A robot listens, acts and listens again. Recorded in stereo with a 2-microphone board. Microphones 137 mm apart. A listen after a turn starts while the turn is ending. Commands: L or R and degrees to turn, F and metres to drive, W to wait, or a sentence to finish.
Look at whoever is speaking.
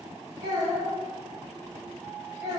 R30
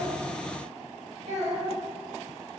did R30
R120
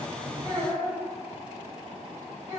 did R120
R20
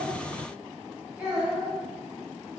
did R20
Found it: a child speaking, straight ahead.